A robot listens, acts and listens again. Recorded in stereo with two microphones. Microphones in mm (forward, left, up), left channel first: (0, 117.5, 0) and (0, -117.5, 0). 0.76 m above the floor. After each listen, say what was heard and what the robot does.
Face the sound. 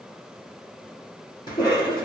The cough: about 20° left or 160° left. Turn 20° left.
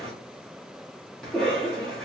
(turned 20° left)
Facing the cough, 1 to 2 m away.